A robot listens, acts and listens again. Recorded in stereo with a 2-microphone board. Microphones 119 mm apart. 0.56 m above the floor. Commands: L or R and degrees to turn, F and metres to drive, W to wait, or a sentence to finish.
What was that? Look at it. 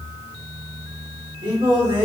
R45
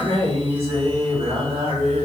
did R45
R50
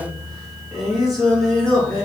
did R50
Found it: singing, straight ahead.